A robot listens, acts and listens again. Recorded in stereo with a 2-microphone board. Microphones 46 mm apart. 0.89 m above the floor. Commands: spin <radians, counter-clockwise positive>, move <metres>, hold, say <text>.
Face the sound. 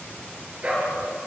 spin -0.44
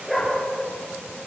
say Found it: a dog barking, straight ahead.